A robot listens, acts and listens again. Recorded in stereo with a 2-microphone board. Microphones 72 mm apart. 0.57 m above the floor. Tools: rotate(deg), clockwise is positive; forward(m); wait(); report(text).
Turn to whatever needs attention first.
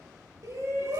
rotate(45)
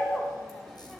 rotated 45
report("Facing the shout.")